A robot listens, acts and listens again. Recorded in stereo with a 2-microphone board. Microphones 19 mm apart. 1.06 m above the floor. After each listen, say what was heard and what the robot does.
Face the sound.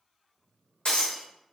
The breaking glass: about 65° left or 115° left. Turn 65° left.
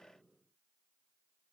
Keep listening.
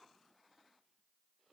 I heard breaking glass, but can't make it out now. It was about straight ahead or 50° left.